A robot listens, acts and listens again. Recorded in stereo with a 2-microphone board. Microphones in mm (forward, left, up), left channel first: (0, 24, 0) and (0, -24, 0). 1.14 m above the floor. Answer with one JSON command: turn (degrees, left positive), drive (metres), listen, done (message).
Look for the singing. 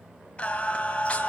{"turn": 25}
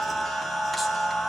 {"done": "Found it: singing, straight ahead."}